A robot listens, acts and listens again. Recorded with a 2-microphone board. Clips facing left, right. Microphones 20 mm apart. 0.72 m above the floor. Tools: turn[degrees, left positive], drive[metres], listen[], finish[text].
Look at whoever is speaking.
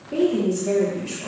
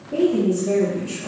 Thought: The woman speaking: about 35° left or 145° left.
Action: turn[35]
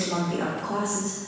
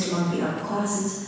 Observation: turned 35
Thought: The woman speaking: about 40° left or 140° left.
Action: turn[40]
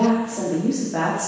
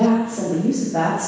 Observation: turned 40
Thought: So it is at 130° left.
Action: turn[130]
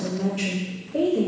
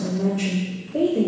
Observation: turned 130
Thought: The woman speaking is now 40° left.
Action: turn[40]
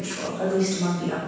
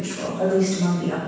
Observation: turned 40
Action: finish[Found it: a woman speaking, straight ahead.]